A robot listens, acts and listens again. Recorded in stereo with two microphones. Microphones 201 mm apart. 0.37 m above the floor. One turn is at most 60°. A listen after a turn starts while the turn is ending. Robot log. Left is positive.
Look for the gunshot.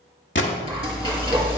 note: The gunshot: about 65° left or 115° left.
cmd yaw +60
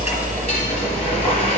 cmd idle
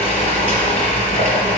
end: I heard a gunshot, but can't make it out now. It was about 5° left or 55° left.